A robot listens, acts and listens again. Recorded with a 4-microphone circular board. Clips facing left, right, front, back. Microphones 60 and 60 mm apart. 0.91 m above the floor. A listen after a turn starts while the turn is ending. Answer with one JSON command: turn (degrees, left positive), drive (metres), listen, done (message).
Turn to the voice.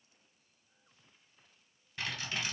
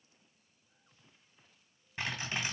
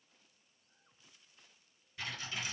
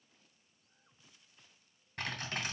{"listen": true}
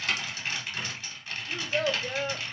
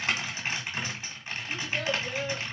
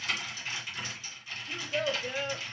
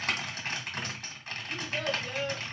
{"turn": 60}
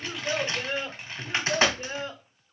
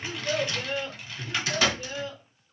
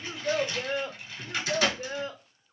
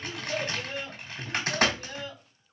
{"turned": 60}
{"turn": 40}
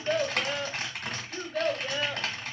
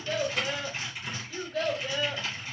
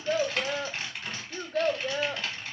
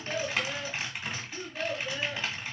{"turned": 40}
{"done": "Found it: a child speaking, straight ahead, 1 to 2 m away."}